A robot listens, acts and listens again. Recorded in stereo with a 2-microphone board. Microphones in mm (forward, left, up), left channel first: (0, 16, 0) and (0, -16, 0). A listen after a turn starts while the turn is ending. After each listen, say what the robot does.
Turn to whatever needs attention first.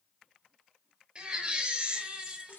Turn 35° right.
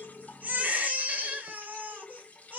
Turn 110° right.
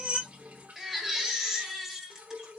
Found it: a baby crying, straight ahead.